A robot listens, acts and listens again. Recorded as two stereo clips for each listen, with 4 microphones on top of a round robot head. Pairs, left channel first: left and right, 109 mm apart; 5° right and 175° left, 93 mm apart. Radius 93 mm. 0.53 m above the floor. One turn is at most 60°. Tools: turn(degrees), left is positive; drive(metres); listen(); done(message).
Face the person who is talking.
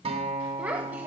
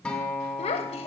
turn(degrees=-10)
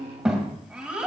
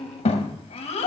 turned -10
turn(degrees=-10)
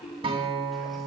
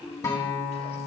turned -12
listen()
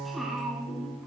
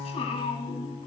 done("Found it: a child speaking, straight ahead.")